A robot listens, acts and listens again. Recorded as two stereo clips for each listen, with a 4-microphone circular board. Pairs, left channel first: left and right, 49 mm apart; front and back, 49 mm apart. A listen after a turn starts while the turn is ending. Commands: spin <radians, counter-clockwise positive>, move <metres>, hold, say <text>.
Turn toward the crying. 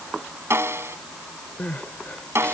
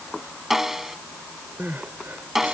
spin 2.53
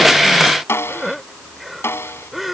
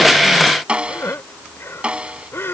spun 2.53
say Found it: crying, straight ahead.